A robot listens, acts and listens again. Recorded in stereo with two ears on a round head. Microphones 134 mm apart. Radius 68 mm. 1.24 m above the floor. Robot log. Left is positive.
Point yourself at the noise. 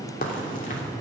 note: The crack: about 55° left or 125° left.
cmd yaw +55
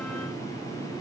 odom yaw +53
cmd idle
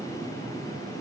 end: I heard a crack, but can't make it out now. It was about straight ahead or 75° left.